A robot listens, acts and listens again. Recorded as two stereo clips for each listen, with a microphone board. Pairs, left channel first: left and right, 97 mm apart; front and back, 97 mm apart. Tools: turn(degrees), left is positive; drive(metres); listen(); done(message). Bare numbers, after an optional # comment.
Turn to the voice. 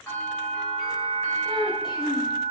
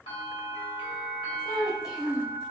# The child speaking: 55° left.
turn(55)
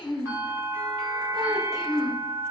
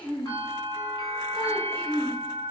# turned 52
done("Found it: a child speaking, straight ahead.")